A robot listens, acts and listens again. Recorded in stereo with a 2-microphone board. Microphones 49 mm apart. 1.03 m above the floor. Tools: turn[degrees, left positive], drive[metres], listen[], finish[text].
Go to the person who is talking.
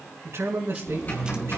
Thought: The man speaking: about 65° right or 115° right.
Action: turn[-65]
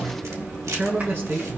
Thought: So it is at 50° right.
Action: turn[-50]
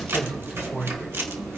Thought: The man speaking is now 10° right.
Action: turn[-10]
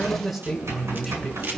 Action: drive[1.0]
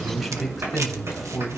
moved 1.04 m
Action: drive[1.0]
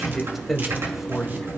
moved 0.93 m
Action: drive[1.0]
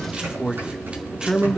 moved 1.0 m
Thought: The man speaking is now 10° right.
Action: turn[-10]
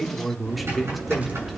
Action: drive[1.0]
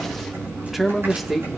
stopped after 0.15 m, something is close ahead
Action: finish[I am next to the man speaking.]